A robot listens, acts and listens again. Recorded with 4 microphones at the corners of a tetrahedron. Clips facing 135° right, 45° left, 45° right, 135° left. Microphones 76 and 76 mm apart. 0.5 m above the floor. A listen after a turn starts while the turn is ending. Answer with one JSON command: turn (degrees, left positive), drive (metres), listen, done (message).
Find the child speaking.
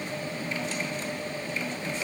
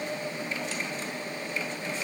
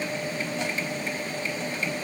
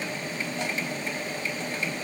{"listen": true}
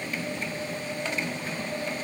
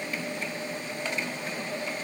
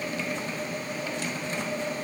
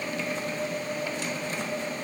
{"listen": true}
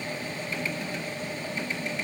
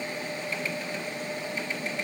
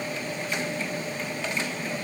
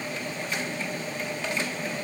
{"done": "I can't make out a child speaking."}